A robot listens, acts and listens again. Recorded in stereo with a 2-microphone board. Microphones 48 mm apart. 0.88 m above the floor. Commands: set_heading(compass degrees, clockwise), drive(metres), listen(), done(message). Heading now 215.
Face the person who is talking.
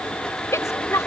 set_heading(125)
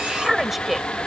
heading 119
done("Facing the woman speaking.")